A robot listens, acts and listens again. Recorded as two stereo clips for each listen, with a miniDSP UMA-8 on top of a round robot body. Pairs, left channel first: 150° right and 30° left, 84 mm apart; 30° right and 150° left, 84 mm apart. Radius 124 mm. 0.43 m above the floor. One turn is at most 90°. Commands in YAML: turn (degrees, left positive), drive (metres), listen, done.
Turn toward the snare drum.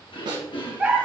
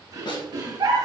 done: "Found it: a snare drum, straight ahead."